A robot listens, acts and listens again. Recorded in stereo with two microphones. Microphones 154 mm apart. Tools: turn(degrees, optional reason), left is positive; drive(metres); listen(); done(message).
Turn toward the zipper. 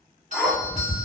turn(degrees=30)
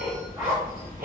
turn(degrees=-30, reason="So it is at 30° right.")
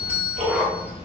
turn(degrees=-15, reason="The zipper is now 15° right.")
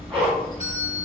listen()
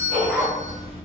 done("Facing the zipper.")